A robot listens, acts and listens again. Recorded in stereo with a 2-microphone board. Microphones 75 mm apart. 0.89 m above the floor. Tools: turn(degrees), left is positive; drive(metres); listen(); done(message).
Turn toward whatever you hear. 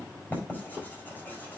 turn(degrees=25)
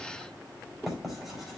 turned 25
done("Facing the writing.")